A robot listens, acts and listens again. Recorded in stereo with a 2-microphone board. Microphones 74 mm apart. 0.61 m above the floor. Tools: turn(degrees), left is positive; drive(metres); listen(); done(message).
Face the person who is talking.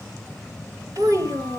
turn(degrees=-50)
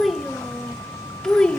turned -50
turn(degrees=15)
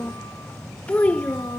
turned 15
turn(degrees=25)
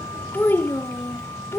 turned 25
turn(degrees=40)
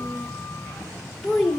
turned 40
done("Found it: a child speaking, straight ahead, 1 to 2 m away.")